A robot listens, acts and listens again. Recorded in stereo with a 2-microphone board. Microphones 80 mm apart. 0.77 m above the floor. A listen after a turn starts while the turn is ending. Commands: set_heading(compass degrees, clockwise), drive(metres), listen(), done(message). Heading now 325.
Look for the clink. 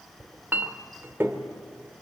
set_heading(350)
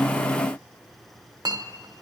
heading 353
set_heading(118)
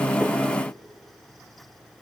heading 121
listen()
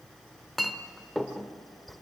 done("Facing the clink, 1 to 2 m away.")